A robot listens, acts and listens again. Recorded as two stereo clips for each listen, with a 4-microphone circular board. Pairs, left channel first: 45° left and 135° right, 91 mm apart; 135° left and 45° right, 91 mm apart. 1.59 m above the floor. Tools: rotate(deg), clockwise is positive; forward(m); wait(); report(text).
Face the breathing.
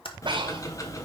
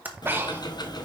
rotate(110)
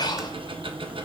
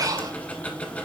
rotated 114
report("Facing the breathing.")